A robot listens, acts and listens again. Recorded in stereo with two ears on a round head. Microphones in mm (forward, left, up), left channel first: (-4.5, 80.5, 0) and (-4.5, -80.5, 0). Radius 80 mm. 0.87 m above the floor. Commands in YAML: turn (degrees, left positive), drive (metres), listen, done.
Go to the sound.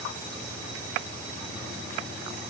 listen: true
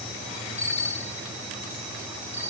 turn: 40
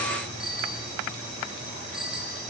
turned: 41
drive: 1.0
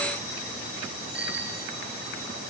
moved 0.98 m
drive: 1.0
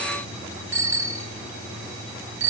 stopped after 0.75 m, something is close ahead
turn: -15
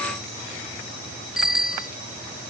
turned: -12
done: "I am next to the bicycle bell."